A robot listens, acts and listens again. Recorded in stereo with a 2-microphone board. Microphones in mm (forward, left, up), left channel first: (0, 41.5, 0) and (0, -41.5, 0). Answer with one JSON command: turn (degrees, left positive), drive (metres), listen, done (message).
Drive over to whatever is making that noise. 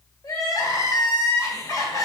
{"turn": 40}
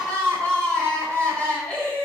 {"turn": 10}
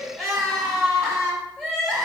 {"drive": 1.0}
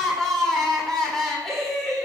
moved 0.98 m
{"drive": 1.0}
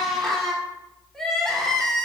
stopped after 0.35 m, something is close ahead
{"done": "I am next to the crying."}